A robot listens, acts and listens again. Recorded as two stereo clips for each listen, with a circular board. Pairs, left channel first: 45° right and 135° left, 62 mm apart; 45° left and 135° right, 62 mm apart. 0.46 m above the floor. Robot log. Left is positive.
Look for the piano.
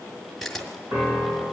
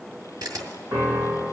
note: The piano: 175° left.
cmd yaw +175
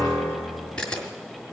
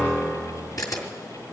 note: The piano is now 25° right.
cmd yaw -25
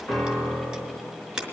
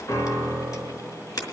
end: Found it: a piano, straight ahead, 2 to 4 m away.